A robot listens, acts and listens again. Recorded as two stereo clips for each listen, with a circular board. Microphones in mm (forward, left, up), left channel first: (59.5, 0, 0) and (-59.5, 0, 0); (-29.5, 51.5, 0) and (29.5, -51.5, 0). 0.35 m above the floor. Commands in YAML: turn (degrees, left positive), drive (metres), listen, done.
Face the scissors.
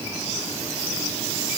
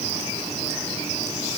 listen: true
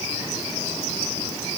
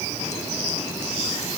listen: true
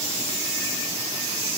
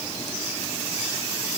done: "I can't make out scissors to turn to."